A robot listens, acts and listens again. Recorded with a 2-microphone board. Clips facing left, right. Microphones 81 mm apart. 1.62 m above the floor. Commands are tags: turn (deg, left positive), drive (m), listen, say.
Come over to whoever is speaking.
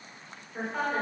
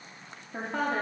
<turn deg="-90"/>
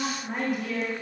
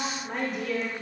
<turn deg="10"/>
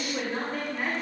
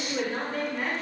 <drive m="1.0"/>
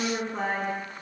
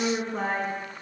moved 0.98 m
<drive m="1.0"/>
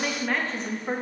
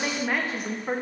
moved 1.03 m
<drive m="1.0"/>
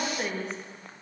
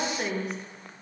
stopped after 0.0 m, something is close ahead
<say>Arrived at the woman speaking, straight ahead.</say>